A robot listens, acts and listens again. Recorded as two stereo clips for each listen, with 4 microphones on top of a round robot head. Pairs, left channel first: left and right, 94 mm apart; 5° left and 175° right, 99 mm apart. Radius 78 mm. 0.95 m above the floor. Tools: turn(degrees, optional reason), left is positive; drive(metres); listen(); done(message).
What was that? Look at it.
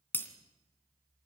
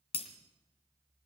turn(degrees=20, reason="The breaking glass: 20° left.")
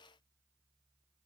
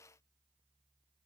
done("Facing where the breaking glass came from. I can't hear it now.")